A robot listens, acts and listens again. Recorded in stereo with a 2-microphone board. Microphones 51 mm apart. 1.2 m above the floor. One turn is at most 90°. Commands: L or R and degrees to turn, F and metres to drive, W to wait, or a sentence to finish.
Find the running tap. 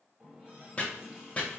R20
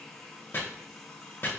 Facing the running tap, 1 to 2 m away.